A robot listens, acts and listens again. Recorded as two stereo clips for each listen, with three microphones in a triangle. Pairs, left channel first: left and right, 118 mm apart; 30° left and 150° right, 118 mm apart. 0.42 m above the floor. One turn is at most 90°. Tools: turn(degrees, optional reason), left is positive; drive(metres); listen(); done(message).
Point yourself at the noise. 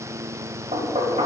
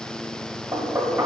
turn(degrees=-85, reason="The knocking: 85° right.")
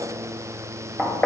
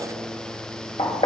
turn(degrees=20, reason="The knocking is now 20° left.")
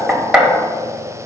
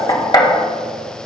done("Facing the knocking.")